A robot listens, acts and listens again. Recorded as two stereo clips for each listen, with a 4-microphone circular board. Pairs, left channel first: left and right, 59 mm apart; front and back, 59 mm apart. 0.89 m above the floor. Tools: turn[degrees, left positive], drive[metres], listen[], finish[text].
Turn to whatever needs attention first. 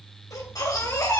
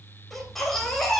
Thought: The baby crying: 85° left.
Action: turn[85]
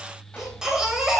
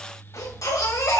Thought: The baby crying is now 10° right.
Action: turn[-10]
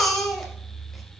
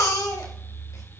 Action: finish[Found it: a baby crying, straight ahead.]